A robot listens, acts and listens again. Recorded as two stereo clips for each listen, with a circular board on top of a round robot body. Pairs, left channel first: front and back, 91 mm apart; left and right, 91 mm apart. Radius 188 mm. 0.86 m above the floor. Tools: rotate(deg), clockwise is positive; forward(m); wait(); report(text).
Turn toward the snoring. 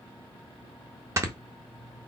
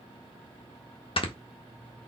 rotate(-120)
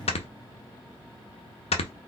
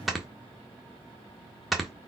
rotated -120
report("Found it: snoring, straight ahead.")